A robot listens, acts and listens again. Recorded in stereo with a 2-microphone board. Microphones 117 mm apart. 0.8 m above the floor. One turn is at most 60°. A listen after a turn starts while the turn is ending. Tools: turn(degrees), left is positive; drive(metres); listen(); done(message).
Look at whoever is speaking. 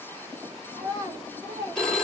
turn(degrees=-30)
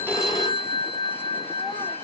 listen()
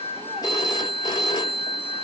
listen()
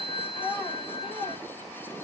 done("Facing the child speaking.")